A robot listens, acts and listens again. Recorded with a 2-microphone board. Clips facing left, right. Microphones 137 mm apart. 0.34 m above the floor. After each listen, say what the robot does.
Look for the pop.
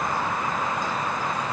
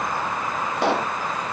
Turn 70° right.
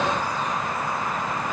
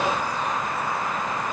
Keep listening.
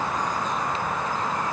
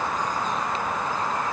I heard a pop, but can't make it out now. It was about straight ahead or 40° right.